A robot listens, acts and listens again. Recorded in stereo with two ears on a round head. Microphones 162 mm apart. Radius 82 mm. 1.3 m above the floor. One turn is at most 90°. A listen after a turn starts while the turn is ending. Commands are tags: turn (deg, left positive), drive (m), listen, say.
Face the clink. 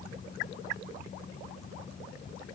<listen/>
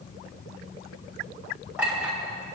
<turn deg="-30"/>
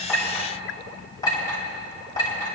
<turn deg="20"/>
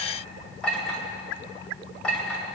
<say>Facing the clink, 2 to 4 m away.</say>